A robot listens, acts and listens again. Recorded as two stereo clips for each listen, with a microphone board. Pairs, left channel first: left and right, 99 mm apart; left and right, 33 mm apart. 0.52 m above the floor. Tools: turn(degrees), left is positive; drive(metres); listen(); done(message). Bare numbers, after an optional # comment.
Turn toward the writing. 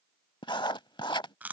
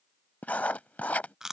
# The writing: about 55° left or 125° left.
turn(55)
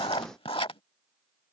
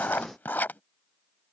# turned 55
# So it is at 70° left.
turn(70)
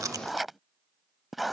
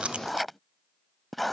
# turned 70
done("Found it: writing, straight ahead.")